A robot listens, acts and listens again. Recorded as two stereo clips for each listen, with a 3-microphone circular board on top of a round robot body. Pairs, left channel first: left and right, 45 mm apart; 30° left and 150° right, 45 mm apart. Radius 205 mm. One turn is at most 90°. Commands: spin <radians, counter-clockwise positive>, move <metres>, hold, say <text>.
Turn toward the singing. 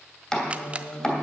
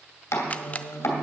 spin 1.40
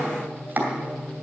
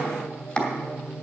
spin 0.61
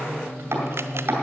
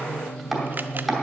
spin 0.44
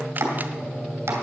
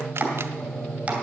say Found it: singing, straight ahead, 2 to 4 m away.